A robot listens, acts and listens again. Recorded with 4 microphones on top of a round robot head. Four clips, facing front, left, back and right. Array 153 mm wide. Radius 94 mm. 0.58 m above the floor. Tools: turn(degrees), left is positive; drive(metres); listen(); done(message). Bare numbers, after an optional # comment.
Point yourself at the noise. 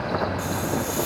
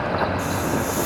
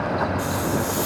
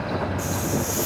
# The hiss: 130° right.
turn(-130)
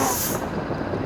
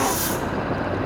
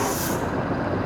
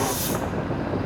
# The hiss is now 30° left.
turn(30)
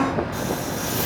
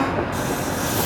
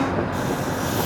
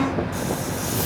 # The hiss is now 10° left.
turn(10)
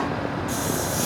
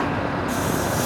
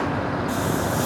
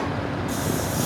done("Found it: a hiss, straight ahead.")